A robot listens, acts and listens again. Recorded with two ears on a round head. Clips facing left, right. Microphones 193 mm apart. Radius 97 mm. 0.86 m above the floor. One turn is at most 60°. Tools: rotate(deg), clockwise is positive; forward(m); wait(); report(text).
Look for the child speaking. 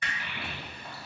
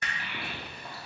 rotate(60)
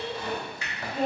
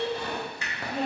rotate(40)
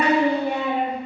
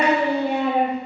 rotate(40)
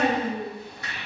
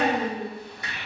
rotate(15)
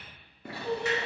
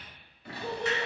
rotate(20)
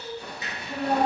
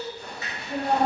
rotate(15)
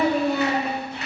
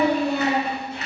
report("Found it: a child speaking, straight ahead, 1 to 2 m away.")